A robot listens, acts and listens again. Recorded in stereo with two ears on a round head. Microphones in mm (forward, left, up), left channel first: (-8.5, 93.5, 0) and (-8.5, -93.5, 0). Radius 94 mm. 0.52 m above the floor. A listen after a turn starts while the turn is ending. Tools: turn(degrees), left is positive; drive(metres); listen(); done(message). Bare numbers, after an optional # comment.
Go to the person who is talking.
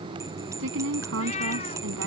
# The woman speaking: about 70° right or 110° right.
turn(-70)
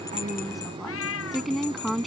drive(1.0)
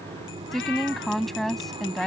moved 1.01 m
drive(1.0)
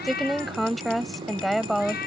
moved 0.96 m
drive(1.0)
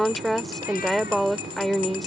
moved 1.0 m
drive(1.0)
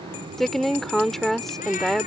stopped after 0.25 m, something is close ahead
done("Arrived at the woman speaking, straight ahead.")